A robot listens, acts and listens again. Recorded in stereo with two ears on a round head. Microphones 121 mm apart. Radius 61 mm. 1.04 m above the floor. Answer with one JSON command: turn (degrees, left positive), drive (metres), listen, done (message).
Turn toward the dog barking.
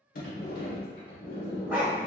{"turn": -30}
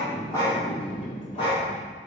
{"turn": 40}
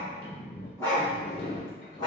{"turn": 30}
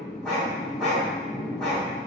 {"done": "Found it: a dog barking, straight ahead, 1 to 2 m away."}